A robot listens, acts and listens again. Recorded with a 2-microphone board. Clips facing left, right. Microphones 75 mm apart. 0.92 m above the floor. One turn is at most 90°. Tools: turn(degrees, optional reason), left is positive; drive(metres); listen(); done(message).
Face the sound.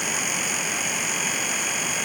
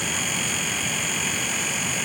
listen()
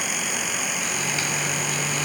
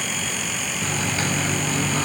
turn(degrees=-35, reason="The microwave: about 35° right or 145° right.")
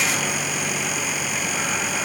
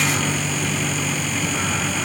done("Found it: a microwave, straight ahead.")